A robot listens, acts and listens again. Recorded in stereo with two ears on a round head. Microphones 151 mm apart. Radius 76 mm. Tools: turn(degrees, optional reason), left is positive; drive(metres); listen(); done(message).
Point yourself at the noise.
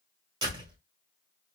turn(degrees=-25, reason="The door slam: about 25° right or 155° right.")
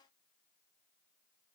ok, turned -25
listen()
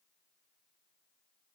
done("I heard a door slam, but can't make it out now. It was about straight ahead or 130° right.")